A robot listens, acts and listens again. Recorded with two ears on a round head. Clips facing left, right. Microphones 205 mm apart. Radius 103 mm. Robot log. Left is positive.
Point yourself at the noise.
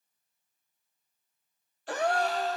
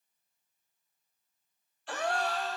note: The gasp: about 35° left or 145° left.
cmd yaw +35
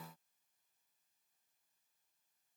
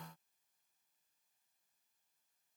cmd idle
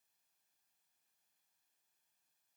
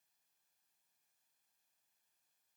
end: I heard a gasp, but can't make it out now. It was about straight ahead or 110° left.